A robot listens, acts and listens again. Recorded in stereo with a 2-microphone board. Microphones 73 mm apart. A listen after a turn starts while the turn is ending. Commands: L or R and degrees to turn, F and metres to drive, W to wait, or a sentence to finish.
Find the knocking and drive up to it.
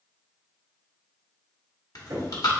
R70
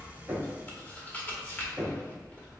R10
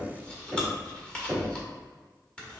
F1.0
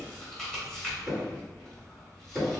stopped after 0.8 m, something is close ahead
I am next to the knocking.